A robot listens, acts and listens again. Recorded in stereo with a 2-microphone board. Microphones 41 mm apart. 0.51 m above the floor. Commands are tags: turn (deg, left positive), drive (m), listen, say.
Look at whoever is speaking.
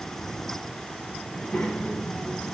<turn deg="35"/>
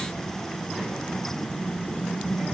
<say>Found it: a child speaking, straight ahead.</say>